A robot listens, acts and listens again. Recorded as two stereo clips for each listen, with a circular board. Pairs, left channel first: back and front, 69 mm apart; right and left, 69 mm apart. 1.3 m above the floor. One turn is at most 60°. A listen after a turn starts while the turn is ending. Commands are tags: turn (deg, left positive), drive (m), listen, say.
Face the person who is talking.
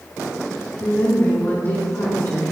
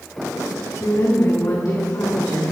<turn deg="-60"/>
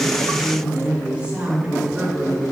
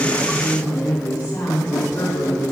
<turn deg="-60"/>
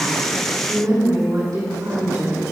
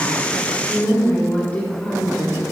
<turn deg="-20"/>
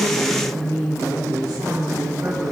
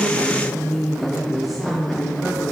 <say>Facing the woman speaking, 2 to 4 m away.</say>